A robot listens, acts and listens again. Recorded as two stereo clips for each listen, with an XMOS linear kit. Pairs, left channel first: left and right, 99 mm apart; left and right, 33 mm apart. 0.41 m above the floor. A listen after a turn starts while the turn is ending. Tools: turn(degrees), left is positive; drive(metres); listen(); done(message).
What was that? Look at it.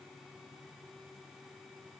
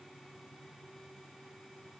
listen()
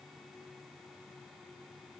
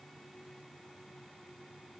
listen()
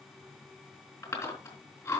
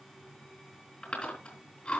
turn(degrees=35)
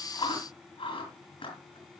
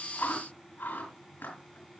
turn(degrees=110)
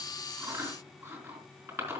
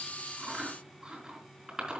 turn(degrees=-30)
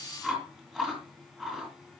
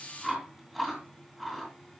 done("Found it: chewing, straight ahead.")